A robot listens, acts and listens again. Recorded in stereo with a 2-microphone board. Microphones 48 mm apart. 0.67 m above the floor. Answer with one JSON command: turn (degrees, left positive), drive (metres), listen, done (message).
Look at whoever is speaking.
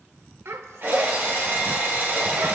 {"turn": -70}
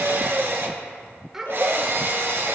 {"turn": -10}
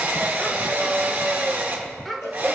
{"done": "Facing the child speaking."}